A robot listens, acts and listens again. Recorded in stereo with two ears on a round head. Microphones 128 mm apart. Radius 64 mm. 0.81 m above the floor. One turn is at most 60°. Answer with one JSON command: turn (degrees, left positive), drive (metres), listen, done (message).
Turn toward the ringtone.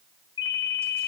{"turn": 30}
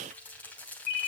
{"turn": 60}
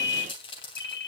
{"turn": 60}
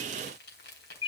{"turn": 40}
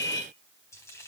{"turn": -25}
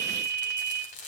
{"turn": 15}
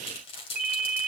{"done": "Facing the ringtone."}